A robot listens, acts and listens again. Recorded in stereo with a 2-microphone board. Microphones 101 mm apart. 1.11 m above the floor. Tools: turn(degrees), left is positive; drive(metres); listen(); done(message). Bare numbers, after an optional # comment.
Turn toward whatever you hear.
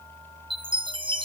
# The chime: about 55° right or 125° right.
turn(-55)
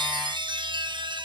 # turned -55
# So it is at 60° right.
turn(-60)
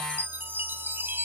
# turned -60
# The chime is now 20° right.
turn(-20)
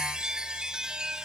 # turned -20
# The chime is now 10° right.
turn(-10)
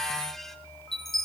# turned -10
done("Found it: a chime, straight ahead, 1 to 2 m away.")